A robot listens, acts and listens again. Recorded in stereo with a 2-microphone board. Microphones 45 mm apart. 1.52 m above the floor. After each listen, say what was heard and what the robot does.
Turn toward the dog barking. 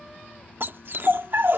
The dog barking: about 55° right or 125° right. Turn 55° right.
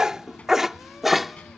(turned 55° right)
Facing the dog barking.